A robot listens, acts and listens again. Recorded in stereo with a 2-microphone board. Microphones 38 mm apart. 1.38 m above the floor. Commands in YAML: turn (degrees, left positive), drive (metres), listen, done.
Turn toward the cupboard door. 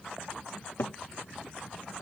turn: 70
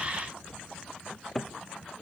done: "Facing the cupboard door."